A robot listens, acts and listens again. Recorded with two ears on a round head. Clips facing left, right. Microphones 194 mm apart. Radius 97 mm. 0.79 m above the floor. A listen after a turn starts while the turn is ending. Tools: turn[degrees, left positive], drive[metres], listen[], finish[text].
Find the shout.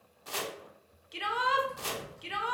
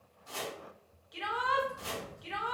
Thought: The shout: about 35° left or 145° left.
Action: turn[35]
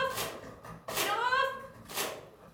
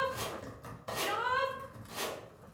Thought: So it is at 105° left.
Action: turn[105]
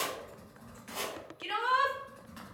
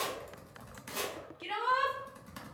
Thought: The shout is now 15° left.
Action: turn[15]
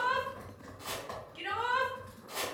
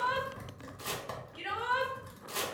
Action: finish[Facing the shout, under 1 m away.]